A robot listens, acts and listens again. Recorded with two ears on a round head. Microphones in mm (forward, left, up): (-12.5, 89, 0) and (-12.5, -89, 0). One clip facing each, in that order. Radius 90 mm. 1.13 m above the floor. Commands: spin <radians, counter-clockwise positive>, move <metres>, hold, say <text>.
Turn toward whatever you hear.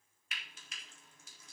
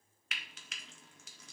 spin -1.05
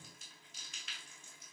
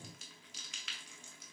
spin -1.05
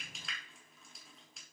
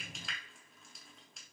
say Found it: frying, straight ahead.